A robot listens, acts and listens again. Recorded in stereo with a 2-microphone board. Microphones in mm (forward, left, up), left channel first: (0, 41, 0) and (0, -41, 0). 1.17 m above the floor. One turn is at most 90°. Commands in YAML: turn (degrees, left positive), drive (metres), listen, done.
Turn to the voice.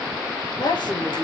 turn: 70
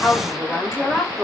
done: "Facing the woman speaking, over 4 m away."